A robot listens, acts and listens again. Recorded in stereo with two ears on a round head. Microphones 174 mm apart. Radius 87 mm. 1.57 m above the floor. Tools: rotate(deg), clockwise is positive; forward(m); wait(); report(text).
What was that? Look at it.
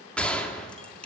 rotate(-30)
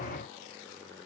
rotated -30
wait()
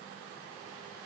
report("I heard a gunshot, but can't make it out now. It was about 25° right or 145° left.")